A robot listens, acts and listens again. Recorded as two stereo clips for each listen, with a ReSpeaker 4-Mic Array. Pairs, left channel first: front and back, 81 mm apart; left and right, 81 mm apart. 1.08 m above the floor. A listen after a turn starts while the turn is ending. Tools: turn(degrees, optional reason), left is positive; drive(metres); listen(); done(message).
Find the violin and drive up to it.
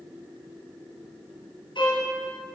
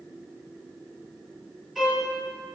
drive(metres=1.0)
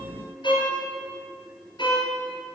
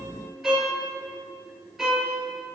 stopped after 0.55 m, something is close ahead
done("Blocked. The violin is further on, straight ahead.")